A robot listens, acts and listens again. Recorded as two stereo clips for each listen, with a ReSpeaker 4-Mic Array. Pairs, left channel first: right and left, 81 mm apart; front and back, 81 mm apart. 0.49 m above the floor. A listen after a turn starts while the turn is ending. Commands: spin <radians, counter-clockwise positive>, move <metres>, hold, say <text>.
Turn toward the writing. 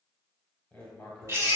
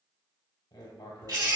spin -0.17
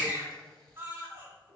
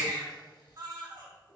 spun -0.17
spin -0.17
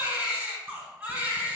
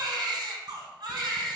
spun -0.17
hold
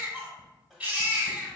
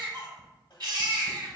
say Facing the writing, 1 to 2 m away.